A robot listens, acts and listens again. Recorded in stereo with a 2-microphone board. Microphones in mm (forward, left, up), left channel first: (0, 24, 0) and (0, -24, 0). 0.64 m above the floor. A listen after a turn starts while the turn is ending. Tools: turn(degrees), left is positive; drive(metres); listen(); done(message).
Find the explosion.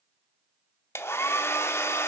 listen()
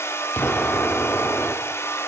turn(degrees=35)
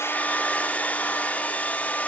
listen()
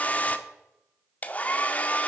done("I heard an explosion, but can't make it out now. It was about straight ahead or 110° left.")